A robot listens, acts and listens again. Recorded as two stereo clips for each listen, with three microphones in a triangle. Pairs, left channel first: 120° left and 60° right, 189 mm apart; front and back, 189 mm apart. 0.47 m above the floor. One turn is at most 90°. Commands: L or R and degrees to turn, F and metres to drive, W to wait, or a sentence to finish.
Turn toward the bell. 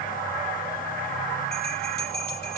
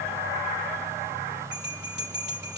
L90
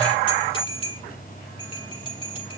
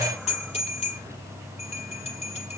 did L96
L55
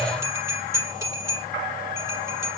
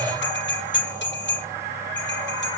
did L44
L15
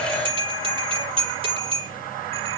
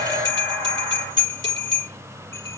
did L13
Facing the bell.